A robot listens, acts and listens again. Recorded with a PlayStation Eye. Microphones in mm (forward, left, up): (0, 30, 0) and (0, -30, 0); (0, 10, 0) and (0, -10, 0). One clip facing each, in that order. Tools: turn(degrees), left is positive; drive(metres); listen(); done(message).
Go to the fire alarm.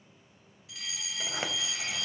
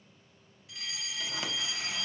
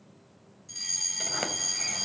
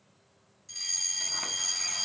turn(degrees=30)
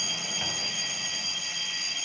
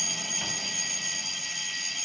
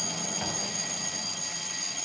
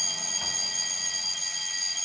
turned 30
turn(degrees=-30)
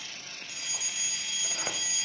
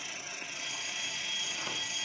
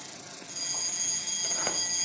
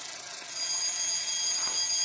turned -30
turn(degrees=10)
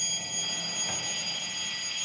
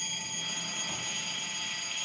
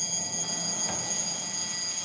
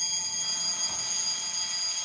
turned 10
drive(metres=1.0)
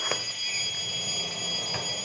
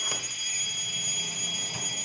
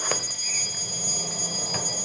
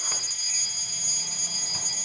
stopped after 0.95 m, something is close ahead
turn(degrees=-10)
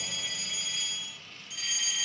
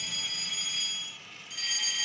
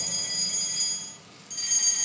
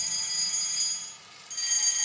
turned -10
done("I am next to the fire alarm.")